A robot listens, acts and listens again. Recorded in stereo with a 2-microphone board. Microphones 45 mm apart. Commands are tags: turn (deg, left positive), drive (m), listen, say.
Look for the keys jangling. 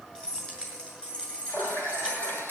<turn deg="20"/>
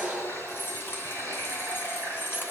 <turn deg="125"/>
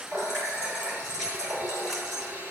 <listen/>
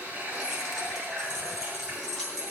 <turn deg="10"/>
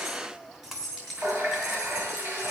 <say>Facing the keys jangling.</say>